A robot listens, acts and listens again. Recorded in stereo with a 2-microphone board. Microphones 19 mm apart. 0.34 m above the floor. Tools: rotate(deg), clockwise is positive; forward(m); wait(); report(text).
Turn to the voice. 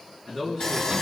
rotate(-30)
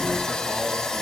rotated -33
wait()
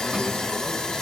wait()
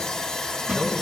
report("I heard a man speaking, but can't make it out now. It was about 25° right or 135° left.")